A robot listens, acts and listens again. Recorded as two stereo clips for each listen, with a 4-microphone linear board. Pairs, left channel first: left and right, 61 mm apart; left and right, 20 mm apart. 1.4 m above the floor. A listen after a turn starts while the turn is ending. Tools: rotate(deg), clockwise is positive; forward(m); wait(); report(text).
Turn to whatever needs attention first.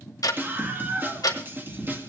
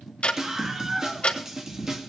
rotate(35)
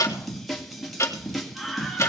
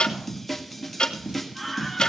report("Found it: a scream, straight ahead.")